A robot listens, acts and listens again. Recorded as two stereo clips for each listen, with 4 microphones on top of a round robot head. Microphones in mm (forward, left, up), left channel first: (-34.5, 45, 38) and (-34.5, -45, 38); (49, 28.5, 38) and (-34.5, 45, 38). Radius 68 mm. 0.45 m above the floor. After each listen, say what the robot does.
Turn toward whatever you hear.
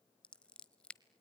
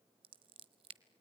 Turn 170° left.
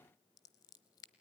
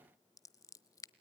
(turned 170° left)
Turn 35° left.
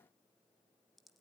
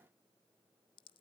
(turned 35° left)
Facing the scissors.